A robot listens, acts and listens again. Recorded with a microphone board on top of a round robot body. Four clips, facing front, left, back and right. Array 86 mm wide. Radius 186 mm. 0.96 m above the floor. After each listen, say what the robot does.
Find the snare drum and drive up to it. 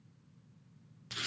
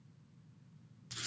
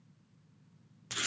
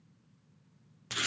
Keep listening.
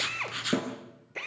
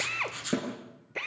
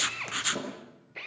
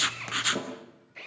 Turn 35° left.
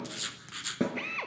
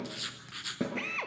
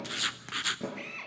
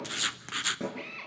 Turn 15° left.
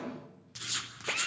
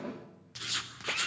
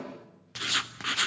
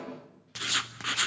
Keep listening.
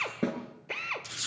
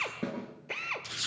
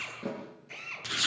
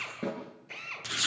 Drive 1.0 m forward.
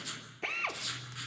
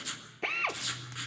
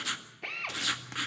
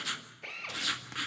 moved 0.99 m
Keep listening.
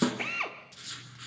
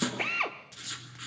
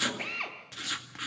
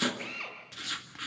Keep listening.
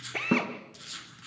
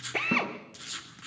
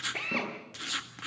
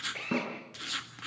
Drive 1.0 m forward.
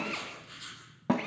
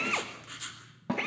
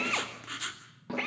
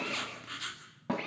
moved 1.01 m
Drive 1.0 m forward.
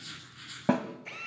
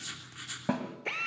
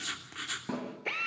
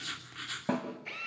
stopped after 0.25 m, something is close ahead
I am next to the snare drum.